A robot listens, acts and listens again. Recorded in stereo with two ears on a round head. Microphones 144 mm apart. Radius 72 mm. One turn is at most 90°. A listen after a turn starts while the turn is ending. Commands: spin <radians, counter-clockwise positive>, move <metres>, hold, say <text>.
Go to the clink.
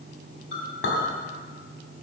spin 1.57
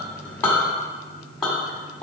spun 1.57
move 1.0
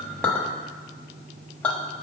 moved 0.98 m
spin 0.17
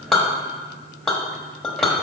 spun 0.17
move 1.0
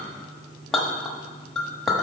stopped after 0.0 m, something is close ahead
say I am next to the clink.